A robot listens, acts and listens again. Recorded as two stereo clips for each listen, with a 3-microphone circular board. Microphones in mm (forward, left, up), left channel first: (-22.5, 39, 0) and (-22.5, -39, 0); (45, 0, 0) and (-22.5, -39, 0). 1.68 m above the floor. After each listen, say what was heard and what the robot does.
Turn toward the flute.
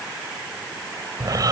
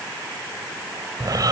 Keep listening.
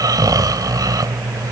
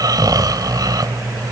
Keep listening.
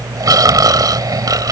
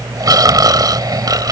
I can't make out a flute to turn to.